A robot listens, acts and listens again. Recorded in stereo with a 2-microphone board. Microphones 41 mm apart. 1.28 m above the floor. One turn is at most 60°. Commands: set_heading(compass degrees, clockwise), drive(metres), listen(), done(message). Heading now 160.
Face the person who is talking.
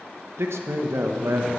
set_heading(220)
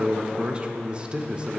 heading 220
set_heading(240)
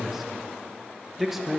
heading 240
done("Facing the man speaking, under 1 m away.")